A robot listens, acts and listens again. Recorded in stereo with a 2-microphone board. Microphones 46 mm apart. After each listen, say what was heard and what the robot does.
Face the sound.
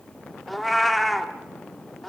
Turn 30° left.
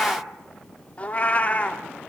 So it is at 150° left. Turn 150° left.
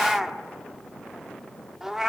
The cat meowing is now 10° right. Turn 10° right.
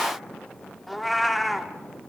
Facing the cat meowing, 1 to 2 m away.